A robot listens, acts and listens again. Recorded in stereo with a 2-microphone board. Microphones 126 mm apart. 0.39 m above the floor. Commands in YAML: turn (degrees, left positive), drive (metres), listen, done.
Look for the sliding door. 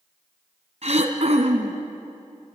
listen: true
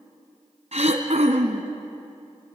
listen: true
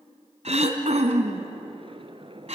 turn: -45
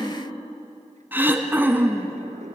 turn: -90
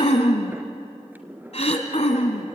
turn: -15
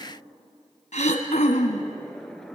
done: "Facing the sliding door."